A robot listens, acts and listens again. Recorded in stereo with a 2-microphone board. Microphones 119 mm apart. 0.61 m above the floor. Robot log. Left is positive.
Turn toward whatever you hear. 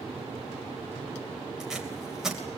cmd yaw -30
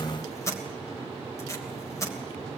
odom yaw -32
note: So it is at 25° left.
cmd yaw +25
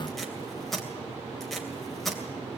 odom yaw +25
end: Facing the tape being pulled.